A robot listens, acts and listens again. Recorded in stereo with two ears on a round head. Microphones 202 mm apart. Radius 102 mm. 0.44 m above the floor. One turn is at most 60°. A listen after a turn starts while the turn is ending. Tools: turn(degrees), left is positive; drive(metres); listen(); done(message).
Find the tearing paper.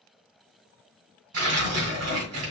turn(degrees=-60)
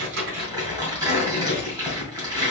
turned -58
turn(degrees=-15)
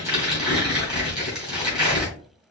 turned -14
done("Facing the tearing paper.")